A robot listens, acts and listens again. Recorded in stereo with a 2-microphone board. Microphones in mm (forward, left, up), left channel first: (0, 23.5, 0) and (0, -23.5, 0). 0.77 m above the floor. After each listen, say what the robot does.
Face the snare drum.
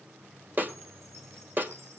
Turn 40° right.
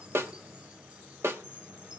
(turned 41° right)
Turn 95° right.
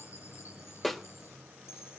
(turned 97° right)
Found it: a snare drum, straight ahead, 1 to 2 m away.